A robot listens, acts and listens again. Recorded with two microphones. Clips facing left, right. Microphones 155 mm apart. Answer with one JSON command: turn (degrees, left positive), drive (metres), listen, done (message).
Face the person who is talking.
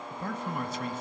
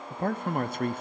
{"turn": -55}
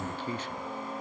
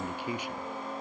{"turn": -15}
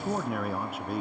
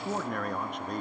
{"done": "Found it: a man speaking, straight ahead, under 1 m away."}